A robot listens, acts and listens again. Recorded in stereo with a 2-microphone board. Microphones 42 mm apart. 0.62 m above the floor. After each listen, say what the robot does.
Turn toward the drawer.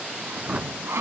Turn 30° right.
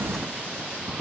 Found it: a drawer, straight ahead.